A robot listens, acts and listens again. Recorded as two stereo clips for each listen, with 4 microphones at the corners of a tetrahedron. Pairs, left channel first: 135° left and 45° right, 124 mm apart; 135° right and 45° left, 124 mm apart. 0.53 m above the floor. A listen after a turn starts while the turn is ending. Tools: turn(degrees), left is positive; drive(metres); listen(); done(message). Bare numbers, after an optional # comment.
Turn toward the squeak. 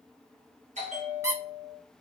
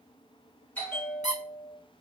# The squeak: 110° right.
turn(-110)
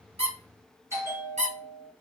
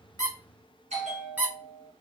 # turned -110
# The squeak is now 30° right.
turn(-30)
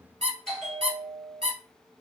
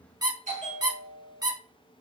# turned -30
# The squeak is now 10° right.
turn(-10)
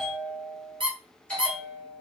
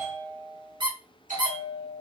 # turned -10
done("Found it: a squeak, straight ahead, 1 to 2 m away.")